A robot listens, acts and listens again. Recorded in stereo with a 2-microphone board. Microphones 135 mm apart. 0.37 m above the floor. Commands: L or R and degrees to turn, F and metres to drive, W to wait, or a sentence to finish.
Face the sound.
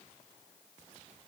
W
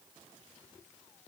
W
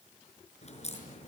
L50
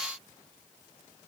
W
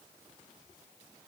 I heard a crack, but can't make it out now. It was about straight ahead or 80° left.